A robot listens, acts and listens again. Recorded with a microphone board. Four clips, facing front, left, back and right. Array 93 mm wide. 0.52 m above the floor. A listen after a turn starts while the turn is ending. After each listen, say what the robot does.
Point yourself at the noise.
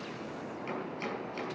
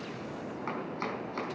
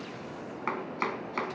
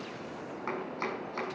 Turn 180° left.
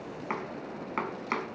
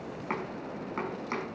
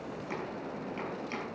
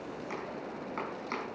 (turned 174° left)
Turn 10° left.
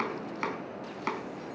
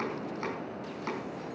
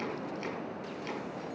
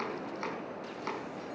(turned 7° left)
Found it: chopping, straight ahead, over 4 m away.